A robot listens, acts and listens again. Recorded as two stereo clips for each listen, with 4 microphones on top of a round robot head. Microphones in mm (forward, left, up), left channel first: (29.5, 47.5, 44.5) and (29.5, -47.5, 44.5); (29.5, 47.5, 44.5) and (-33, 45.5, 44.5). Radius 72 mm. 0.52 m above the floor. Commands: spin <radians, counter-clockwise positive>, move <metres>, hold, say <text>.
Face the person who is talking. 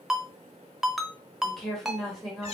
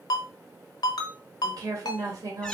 spin 3.14
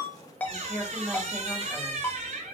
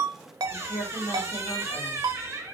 spin -0.17
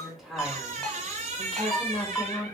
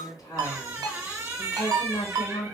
say Found it: a woman speaking, straight ahead, 2 to 4 m away.